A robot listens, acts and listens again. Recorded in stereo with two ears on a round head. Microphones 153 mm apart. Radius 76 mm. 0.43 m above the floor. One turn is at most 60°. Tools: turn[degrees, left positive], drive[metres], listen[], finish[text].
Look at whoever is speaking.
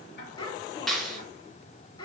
Thought: The child speaking: about 25° left or 155° left.
Action: turn[25]
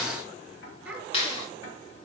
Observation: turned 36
Thought: So it is at 10° right.
Action: turn[-10]
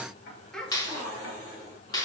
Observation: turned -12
Action: finish[Facing the child speaking.]